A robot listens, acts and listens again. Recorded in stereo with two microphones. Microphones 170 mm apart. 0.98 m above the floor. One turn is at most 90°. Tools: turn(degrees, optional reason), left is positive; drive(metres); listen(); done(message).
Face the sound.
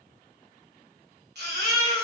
turn(degrees=-90)
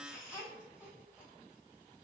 listen()
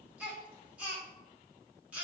turn(degrees=-10, reason="The baby crying is now 10° right.")
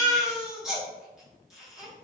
done("Found it: a baby crying, straight ahead, 1 to 2 m away.")